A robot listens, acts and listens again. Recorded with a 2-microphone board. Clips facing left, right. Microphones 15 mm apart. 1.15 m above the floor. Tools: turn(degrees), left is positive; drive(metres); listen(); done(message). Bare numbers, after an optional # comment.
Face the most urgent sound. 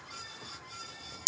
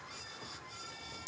listen()
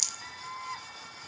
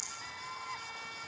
# The scream: about 15° left or 165° left.
turn(15)
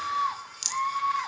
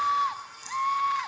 done("Facing the scream.")